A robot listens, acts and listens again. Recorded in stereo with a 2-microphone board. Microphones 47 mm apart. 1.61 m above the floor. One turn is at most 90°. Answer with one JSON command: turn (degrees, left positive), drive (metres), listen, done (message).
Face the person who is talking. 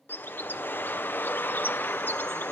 {"listen": true}
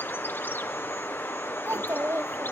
{"turn": -65}
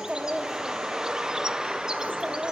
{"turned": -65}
{"turn": -25}
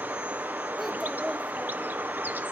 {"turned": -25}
{"listen": true}
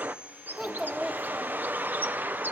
{"done": "Facing the child speaking."}